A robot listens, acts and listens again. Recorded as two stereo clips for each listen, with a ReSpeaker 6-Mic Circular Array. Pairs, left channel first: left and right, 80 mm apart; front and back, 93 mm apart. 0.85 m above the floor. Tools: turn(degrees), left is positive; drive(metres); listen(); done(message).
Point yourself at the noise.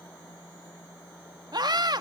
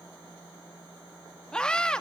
turn(degrees=-80)
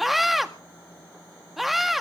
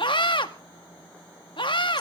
done("Facing the scream, 1 to 2 m away.")